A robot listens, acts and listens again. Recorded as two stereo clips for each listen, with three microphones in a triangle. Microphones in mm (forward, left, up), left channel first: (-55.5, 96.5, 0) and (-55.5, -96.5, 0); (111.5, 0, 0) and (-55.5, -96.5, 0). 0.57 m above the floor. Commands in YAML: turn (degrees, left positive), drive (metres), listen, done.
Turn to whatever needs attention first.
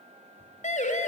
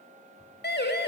turn: 45
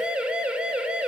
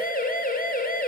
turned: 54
done: "Found it: a siren, straight ahead."